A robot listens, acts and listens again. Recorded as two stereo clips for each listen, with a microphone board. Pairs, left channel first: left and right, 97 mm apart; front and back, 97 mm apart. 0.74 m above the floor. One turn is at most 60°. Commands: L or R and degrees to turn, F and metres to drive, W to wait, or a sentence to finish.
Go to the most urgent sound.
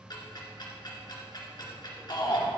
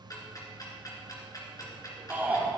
L60
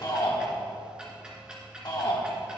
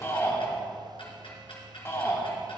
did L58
L55
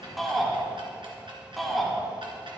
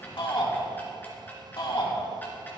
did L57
F1.0
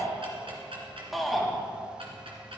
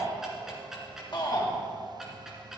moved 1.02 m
F1.0
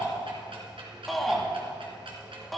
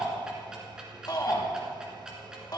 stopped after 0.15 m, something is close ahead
I am next to the shout.